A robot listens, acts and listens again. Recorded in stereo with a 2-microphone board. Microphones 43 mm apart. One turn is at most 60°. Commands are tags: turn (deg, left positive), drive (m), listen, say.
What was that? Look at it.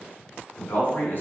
<turn deg="50"/>
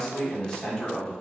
<turn deg="20"/>
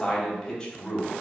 <turn deg="20"/>
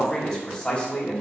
<turn deg="30"/>
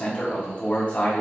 <turn deg="40"/>
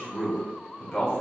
<turn deg="10"/>
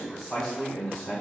<say>Found it: a man speaking, straight ahead, 1 to 2 m away.</say>